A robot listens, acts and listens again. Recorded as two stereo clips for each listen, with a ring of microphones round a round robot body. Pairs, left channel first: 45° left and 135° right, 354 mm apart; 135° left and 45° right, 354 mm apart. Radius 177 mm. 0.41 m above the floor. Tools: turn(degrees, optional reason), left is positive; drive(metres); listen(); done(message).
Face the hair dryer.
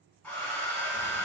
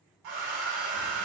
turn(degrees=-40, reason="The hair dryer: 40° right.")
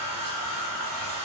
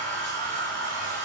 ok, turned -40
done("Facing the hair dryer, 1 to 2 m away.")